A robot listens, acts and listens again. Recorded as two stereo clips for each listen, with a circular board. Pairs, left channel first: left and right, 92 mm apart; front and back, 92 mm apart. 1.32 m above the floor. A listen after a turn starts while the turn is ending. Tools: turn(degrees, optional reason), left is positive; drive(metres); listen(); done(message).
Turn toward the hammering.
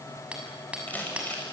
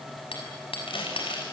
turn(degrees=-10, reason="The hammering: 10° right.")
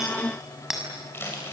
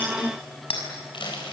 done("Facing the hammering.")